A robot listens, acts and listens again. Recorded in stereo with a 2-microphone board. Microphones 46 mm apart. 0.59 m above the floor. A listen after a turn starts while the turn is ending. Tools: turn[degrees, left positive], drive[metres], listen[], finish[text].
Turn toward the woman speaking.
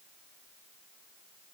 Action: listen[]
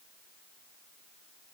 Action: listen[]
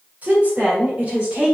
Thought: The woman speaking: about 25° right or 155° right.
Action: turn[-25]
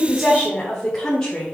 Thought: So it is at 20° left.
Action: turn[20]
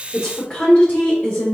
Thought: The woman speaking is now 25° left.
Action: turn[25]
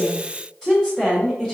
Action: finish[Facing the woman speaking, 1 to 2 m away.]